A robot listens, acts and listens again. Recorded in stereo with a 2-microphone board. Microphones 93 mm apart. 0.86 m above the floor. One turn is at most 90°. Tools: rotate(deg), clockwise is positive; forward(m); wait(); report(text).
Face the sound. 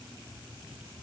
wait()
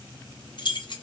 rotate(-55)
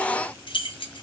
rotate(-65)
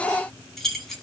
report("Found it: keys jangling, straight ahead.")